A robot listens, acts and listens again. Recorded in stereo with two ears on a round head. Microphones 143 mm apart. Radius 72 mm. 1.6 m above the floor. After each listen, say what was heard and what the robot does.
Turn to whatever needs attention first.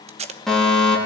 Turn 30° left.
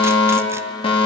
So it is at 145° left. Turn 145° left.
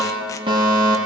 The fire alarm is now 30° right. Turn 30° right.
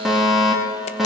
Facing the fire alarm.